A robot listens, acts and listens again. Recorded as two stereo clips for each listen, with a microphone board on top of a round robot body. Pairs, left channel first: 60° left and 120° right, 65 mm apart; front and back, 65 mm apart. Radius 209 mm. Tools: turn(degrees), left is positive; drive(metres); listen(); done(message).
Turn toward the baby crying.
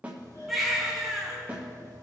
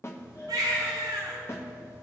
turn(degrees=150)
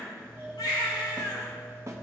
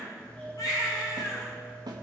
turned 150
turn(degrees=40)
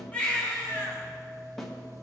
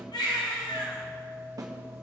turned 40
turn(degrees=-15)
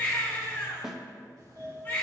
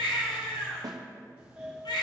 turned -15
done("Found it: a baby crying, straight ahead.")